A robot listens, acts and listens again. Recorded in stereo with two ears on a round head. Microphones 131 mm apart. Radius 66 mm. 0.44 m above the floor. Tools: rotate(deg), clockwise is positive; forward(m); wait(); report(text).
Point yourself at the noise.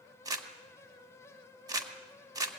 rotate(25)
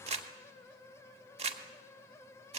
rotate(120)
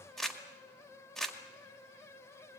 report("Facing the crumpling.")